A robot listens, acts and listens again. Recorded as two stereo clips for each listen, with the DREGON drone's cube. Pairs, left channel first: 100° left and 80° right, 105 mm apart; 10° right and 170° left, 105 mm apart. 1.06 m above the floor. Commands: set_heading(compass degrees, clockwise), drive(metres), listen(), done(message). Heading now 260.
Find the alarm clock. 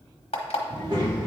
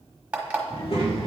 set_heading(170)
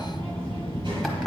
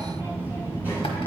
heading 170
set_heading(160)
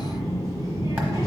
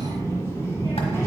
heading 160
listen()
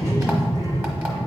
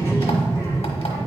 listen()
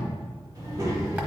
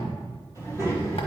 done("I heard an alarm clock from this way, but can't make it out now.")